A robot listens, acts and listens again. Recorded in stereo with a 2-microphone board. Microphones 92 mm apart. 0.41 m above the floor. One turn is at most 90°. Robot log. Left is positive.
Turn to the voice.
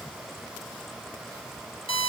cmd idle
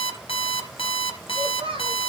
note: The child speaking: about 70° right or 110° right.
cmd yaw -70
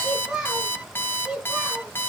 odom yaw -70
end: Facing the child speaking, over 4 m away.